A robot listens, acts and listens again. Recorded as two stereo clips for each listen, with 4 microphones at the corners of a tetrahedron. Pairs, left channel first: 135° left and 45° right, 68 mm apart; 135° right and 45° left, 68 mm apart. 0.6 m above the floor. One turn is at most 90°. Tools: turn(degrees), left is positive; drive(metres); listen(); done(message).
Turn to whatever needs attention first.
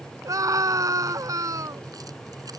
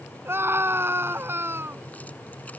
turn(degrees=-10)
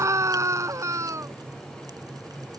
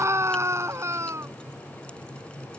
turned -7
done("Facing the scream.")